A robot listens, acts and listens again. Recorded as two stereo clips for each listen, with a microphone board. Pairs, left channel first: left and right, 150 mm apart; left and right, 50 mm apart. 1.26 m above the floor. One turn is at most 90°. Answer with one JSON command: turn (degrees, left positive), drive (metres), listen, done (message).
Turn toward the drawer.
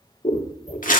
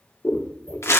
{"listen": true}
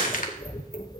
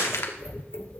{"listen": true}
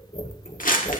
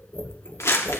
{"done": "I can't make out a drawer to turn to."}